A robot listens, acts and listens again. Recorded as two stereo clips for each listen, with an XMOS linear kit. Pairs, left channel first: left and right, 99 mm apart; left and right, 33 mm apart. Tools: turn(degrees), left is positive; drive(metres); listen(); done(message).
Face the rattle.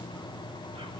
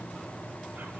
listen()
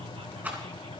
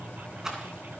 turn(degrees=-20)
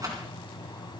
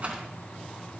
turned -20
turn(degrees=-140)
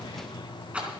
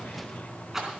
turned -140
turn(degrees=-10)
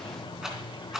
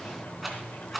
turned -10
done("Facing the rattle, 2 to 4 m away.")